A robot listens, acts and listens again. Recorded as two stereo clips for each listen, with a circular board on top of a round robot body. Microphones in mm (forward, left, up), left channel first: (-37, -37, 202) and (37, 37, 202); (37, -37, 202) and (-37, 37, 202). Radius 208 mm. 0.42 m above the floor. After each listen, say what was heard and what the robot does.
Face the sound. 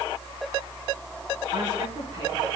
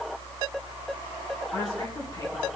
Keep listening.
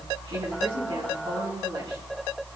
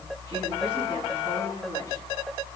Keep listening.
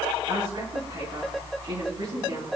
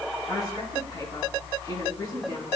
The woman speaking: 10° left. Turn 10° left.
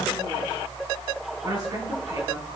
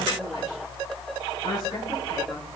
Facing the woman speaking, over 4 m away.